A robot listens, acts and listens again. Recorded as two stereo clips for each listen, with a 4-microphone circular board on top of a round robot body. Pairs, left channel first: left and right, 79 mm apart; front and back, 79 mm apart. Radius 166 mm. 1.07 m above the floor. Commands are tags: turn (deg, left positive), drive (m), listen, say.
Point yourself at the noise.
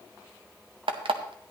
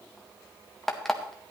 <turn deg="-85"/>
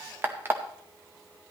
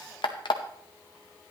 <turn deg="-25"/>
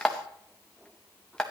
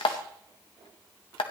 <turn deg="10"/>
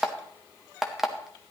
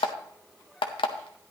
<say>Facing the alarm clock, under 1 m away.</say>